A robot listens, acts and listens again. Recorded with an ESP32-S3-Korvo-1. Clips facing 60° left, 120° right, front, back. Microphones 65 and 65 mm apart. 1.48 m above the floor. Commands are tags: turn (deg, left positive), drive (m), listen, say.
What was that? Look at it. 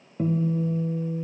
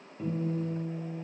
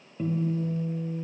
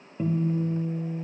<turn deg="105"/>
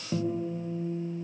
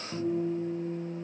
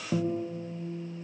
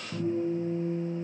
<say>Facing the guitar, under 1 m away.</say>